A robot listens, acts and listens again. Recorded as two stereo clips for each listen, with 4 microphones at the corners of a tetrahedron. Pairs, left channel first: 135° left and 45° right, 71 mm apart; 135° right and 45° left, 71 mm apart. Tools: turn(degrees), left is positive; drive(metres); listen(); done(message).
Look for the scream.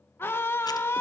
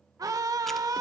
turn(degrees=80)
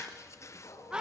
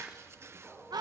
turn(degrees=30)
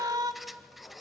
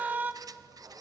turn(degrees=-20)
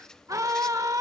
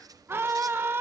turn(degrees=-10)
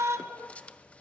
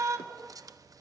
done("Facing the scream, 1 to 2 m away.")